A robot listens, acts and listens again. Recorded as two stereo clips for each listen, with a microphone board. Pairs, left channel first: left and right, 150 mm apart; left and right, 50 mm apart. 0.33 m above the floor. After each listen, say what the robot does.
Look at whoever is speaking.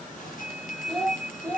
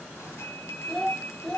Turn 30° left.
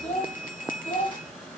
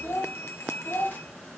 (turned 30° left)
Turn 125° left.
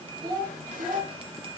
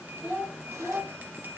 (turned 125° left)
Turn 45° right.
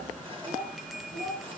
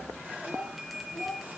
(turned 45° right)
Turn 20° right.
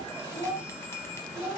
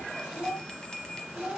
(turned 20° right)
Found it: a child speaking, straight ahead.